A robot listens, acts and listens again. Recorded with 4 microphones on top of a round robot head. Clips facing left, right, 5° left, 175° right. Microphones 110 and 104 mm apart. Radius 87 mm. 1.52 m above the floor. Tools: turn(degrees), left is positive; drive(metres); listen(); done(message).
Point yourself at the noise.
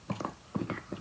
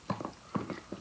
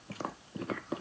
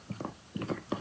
listen()
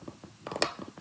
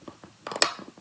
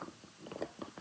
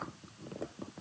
listen()
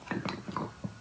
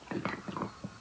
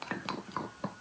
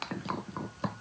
done("I can't make out anything to turn to.")